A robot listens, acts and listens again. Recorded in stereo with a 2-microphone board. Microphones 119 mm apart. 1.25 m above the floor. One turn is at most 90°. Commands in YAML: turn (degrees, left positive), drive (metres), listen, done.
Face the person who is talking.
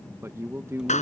turn: -25
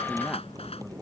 listen: true
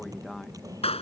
listen: true
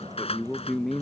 done: "Found it: a man speaking, straight ahead."